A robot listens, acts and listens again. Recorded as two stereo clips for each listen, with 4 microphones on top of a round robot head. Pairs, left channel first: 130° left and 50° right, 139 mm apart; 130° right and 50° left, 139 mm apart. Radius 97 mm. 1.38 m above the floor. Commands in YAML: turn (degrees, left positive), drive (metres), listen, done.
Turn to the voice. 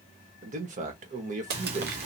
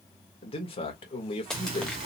turn: -85
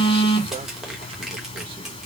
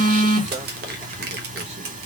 listen: true
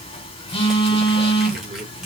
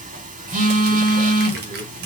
listen: true
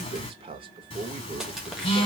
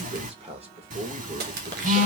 done: "Found it: a man speaking, straight ahead, 1 to 2 m away."